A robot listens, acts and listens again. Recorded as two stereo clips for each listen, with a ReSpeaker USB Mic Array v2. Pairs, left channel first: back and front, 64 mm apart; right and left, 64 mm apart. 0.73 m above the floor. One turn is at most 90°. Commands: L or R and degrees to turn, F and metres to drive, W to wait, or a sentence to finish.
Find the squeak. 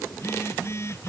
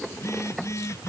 W
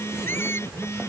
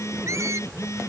L90
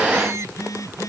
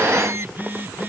L40
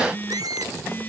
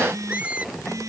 L20
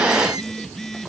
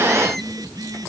W
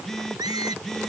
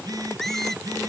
Found it: a squeak, straight ahead.